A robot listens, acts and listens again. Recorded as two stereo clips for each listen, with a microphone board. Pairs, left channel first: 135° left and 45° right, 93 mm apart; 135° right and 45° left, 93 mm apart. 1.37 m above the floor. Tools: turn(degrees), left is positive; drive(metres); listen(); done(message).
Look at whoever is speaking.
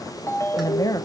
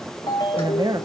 turn(degrees=85)
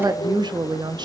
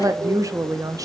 done("Found it: a woman speaking, straight ahead.")